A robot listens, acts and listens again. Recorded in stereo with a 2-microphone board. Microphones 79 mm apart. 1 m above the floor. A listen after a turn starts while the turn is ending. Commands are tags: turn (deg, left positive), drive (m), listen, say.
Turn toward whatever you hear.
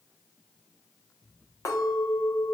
<turn deg="50"/>
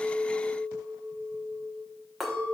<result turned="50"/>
<say>Facing the clink, 1 to 2 m away.</say>